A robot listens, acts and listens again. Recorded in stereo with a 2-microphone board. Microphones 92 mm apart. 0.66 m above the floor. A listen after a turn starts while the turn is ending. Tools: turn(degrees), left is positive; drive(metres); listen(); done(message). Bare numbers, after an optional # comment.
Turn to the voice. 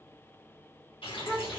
# The child speaking: about 25° left or 155° left.
turn(25)
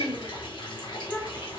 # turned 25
# The child speaking: about 20° left or 160° left.
turn(20)
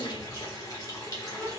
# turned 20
# The child speaking: about 15° left or 165° left.
turn(15)
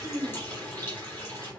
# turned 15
listen()
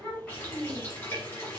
# The child speaking: about 15° left or 165° left.
turn(15)
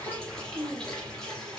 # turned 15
done("Found it: a child speaking, straight ahead.")